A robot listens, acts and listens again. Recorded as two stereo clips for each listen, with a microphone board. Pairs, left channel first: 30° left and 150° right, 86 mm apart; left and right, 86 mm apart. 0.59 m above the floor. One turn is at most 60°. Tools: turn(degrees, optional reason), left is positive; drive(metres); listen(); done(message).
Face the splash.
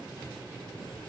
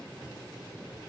listen()
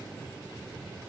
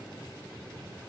listen()
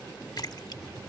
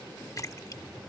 turn(degrees=50, reason="The splash: 50° left.")
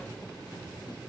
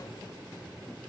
done("I heard a splash from this way, but can't make it out now.")